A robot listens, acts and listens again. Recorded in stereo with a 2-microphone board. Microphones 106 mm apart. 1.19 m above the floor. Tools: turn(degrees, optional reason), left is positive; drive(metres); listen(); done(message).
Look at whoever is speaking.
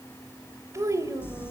turn(degrees=-30, reason="The child speaking: about 30° right or 150° right.")
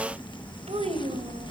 turn(degrees=-110, reason="So it is at 110° right.")
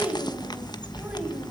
turn(degrees=-10, reason="The child speaking is now 10° right.")
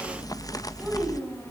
done("Facing the child speaking.")